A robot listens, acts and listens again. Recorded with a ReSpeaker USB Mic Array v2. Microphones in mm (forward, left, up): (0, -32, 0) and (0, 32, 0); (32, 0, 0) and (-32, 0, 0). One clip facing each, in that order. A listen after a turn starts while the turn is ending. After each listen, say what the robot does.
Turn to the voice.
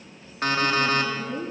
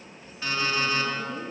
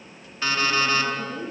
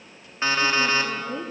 Turn 165° right.
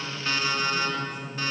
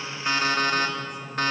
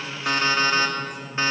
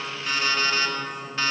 Keep listening.
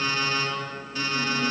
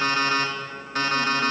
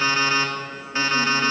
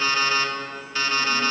Keep listening.
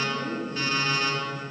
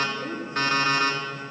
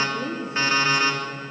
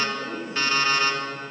Turn 15° left.
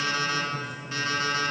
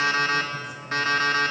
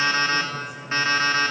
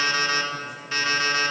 Keep listening.
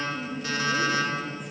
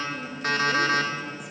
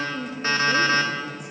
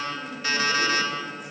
Facing the woman speaking, 2 to 4 m away.